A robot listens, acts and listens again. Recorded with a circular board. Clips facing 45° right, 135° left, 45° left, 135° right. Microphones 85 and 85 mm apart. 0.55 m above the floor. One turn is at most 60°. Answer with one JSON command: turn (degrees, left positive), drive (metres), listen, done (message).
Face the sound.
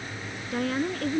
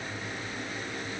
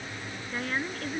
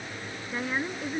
{"turn": -55}
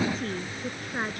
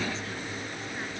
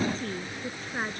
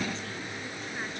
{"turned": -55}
{"done": "Facing the woman speaking."}